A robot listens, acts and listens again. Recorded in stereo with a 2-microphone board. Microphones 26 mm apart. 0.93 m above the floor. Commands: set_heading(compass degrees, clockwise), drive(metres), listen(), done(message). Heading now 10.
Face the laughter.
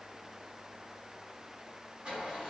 listen()
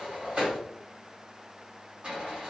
listen()
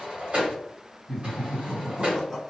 set_heading(340)
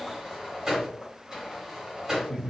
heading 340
set_heading(190)
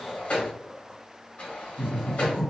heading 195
done("Facing the laughter, 1 to 2 m away.")